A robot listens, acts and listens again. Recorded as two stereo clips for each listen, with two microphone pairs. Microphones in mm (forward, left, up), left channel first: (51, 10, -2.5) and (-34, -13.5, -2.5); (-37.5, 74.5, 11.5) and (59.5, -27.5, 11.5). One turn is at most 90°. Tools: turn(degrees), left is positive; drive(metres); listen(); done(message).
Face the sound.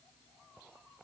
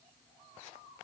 listen()
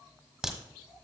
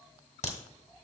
turn(degrees=90)
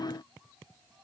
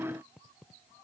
turn(degrees=20)
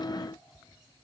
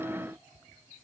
done("Facing where the crack came from. I can't hear it now.")